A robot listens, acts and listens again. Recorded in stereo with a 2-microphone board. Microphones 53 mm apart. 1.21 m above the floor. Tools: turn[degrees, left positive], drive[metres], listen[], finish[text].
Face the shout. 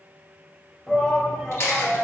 Action: turn[30]
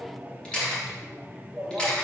Thought: So it is at 15° right.
Action: turn[-15]
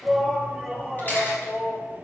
Action: finish[Facing the shout, 2 to 4 m away.]